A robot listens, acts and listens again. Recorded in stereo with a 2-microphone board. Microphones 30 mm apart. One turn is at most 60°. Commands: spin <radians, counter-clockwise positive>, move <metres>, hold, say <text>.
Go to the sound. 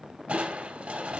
spin -0.87
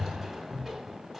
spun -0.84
spin -0.26
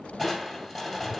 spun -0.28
move 1.0
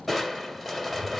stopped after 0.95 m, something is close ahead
say Arrived at the crushing, straight ahead.